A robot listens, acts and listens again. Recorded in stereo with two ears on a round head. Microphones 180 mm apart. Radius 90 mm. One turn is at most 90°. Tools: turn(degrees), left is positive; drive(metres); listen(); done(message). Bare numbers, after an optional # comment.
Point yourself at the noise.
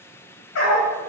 # The dog barking: about 75° left or 105° left.
turn(75)
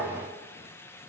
listen()
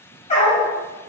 # So it is at 35° left.
turn(35)
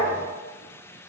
done("Facing the dog barking.")